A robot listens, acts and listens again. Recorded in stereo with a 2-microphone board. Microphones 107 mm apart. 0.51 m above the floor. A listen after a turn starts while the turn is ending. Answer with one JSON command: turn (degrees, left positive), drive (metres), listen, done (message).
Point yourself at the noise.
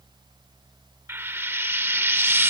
{"turn": -20}
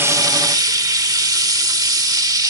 {"turn": -135}
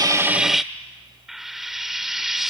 {"done": "Found it: frying, straight ahead."}